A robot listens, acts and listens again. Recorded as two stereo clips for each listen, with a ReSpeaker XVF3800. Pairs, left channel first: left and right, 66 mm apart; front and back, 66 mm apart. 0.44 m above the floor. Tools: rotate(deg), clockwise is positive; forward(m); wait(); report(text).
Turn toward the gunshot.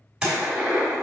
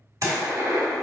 rotate(165)
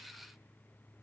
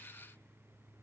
report("I heard a gunshot from this way, but can't make it out now.")